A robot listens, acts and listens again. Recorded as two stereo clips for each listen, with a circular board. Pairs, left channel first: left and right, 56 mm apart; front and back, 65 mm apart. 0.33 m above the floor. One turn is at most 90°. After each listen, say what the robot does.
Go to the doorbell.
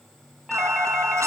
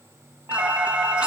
Turn 90° right.
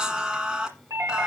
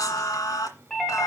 Turn 85° right.
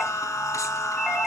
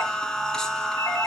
Turn 10° left.
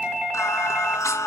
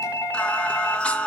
Drive 1.0 m forward.
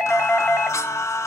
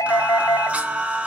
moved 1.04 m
Drive 1.0 m forward.
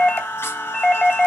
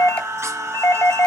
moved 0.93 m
Turn 15° left.
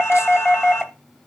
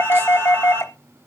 Drive 1.0 m forward.
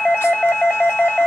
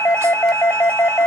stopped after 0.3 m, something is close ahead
I am next to the doorbell.